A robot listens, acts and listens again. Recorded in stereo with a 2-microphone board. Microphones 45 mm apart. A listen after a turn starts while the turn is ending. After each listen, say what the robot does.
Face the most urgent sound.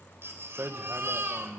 Turn 65° right.
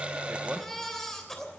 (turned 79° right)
Turn 10° left.
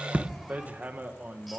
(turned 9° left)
Keep listening.
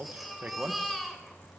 Found it: a baby crying, straight ahead.